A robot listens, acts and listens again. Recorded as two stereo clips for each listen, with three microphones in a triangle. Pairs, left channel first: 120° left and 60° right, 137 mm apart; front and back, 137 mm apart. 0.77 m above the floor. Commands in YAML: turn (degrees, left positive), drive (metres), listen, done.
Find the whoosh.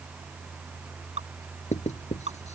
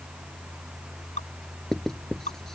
listen: true
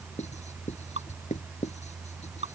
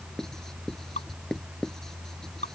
listen: true
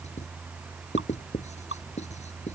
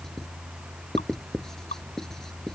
done: "I can't make out a whoosh, only dripping and writing."